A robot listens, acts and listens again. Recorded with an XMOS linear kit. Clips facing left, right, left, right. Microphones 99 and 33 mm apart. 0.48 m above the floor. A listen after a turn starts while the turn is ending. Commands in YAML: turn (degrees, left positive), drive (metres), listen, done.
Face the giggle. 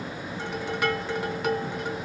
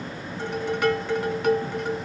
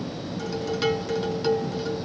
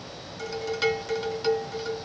listen: true
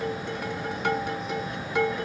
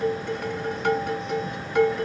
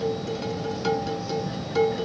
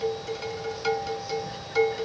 listen: true
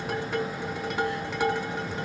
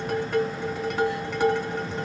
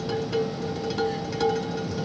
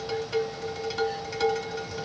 done: "I can't make out a giggle to turn to."